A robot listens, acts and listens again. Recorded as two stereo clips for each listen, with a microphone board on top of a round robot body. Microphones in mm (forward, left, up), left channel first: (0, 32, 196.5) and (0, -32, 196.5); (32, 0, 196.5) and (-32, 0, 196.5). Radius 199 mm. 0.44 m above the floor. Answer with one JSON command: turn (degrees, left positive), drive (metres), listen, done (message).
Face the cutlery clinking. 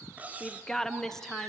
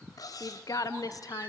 {"turn": -25}
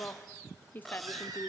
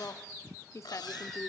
{"done": "Found it: cutlery clinking, straight ahead."}